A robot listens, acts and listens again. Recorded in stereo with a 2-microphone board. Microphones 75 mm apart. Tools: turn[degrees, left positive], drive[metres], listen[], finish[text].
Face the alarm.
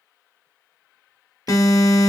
Thought: The alarm: about 50° left or 130° left.
Action: turn[50]
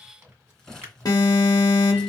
Thought: So it is at 70° left.
Action: turn[70]
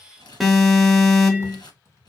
Action: finish[Facing the alarm.]